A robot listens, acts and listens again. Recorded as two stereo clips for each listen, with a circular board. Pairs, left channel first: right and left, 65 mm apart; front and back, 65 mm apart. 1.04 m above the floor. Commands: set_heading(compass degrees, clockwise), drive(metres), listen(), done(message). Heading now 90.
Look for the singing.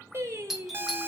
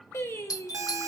set_heading(50)
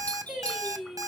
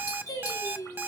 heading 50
done("Found it: singing, straight ahead, 2 to 4 m away.")